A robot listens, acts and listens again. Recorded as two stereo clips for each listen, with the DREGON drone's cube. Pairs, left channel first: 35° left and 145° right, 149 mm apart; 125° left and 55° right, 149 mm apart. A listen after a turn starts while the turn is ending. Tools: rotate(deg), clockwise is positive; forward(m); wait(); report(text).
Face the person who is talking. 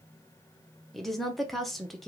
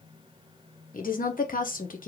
rotate(-125)
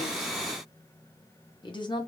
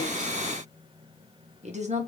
rotate(20)
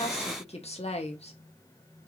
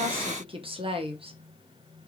report("Facing the woman speaking.")